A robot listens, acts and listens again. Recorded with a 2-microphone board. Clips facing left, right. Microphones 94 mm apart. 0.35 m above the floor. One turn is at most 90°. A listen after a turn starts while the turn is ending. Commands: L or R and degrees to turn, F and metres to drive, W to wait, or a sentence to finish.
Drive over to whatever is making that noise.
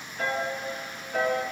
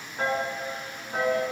R40
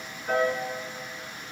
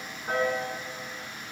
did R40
W
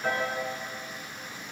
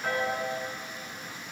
F1.0
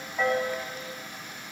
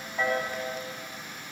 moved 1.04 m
F1.0
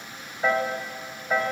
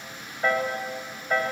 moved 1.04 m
F1.0
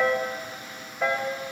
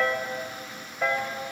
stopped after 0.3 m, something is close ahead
L10
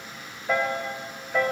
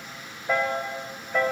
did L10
Arrived at the piano, straight ahead.